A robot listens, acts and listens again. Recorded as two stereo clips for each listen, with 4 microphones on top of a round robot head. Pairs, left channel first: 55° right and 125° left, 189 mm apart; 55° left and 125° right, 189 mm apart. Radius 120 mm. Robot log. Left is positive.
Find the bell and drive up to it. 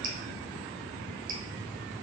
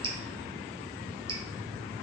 cmd idle
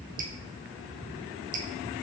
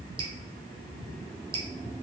cmd idle
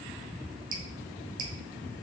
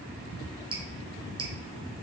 end: I can't make out a bell to turn to.